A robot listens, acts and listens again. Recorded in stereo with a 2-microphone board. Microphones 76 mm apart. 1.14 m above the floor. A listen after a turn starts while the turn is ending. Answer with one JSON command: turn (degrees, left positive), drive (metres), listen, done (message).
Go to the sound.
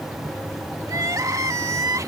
{"turn": -50}
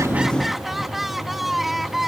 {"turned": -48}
{"drive": 1.0}
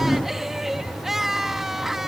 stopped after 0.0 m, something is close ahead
{"done": "Something is in my way. I am facing the crying but have not reached it."}